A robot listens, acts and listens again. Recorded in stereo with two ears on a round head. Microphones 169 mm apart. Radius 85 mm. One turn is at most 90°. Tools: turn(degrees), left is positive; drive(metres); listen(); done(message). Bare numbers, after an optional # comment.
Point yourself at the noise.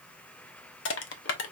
# The crushing: about 70° left or 110° left.
turn(70)
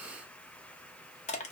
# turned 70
# So it is at 35° left.
turn(35)
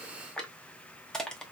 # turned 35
done("Found it: crushing, straight ahead, under 1 m away.")